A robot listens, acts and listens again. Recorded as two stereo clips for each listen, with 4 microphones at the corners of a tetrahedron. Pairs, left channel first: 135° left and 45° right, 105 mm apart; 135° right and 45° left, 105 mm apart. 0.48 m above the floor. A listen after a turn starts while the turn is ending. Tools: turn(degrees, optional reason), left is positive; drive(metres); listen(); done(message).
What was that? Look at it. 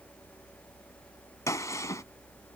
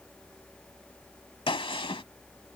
turn(degrees=-165, reason="The gunshot: 165° right.")
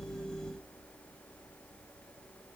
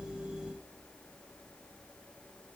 done("Facing where the gunshot came from. I can't hear it now.")